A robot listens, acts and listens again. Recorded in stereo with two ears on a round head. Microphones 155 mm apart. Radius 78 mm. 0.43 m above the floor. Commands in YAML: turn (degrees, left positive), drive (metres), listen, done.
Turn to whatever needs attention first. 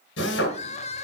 turn: 40
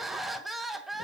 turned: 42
done: "Facing the crying, 1 to 2 m away."